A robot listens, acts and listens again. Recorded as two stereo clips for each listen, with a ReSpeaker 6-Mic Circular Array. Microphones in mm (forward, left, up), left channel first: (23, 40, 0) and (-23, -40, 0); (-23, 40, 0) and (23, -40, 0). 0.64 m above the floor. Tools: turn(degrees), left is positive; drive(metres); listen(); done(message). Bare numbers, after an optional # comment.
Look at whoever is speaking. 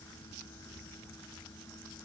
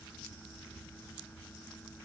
listen()
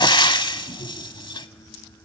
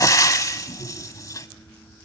listen()
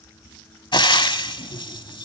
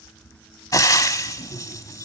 done("I can't make out anyone speaking, only frying.")